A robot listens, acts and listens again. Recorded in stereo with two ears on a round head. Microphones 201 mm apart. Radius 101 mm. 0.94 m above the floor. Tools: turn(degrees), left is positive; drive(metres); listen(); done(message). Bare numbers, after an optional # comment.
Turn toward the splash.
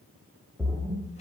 turn(30)
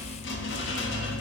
listen()
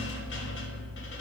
done("I heard a splash, but can't make it out now. It was about 30° right or 150° left.")